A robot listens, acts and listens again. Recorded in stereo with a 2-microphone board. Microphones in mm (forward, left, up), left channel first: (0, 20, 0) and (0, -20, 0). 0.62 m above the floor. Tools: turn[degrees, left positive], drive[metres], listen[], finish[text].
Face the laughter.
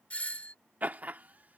Thought: The laughter: about 40° right or 140° right.
Action: turn[-40]
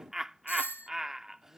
Thought: So it is at 10° right.
Action: turn[-10]
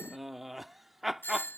Action: finish[Found it: laughter, straight ahead.]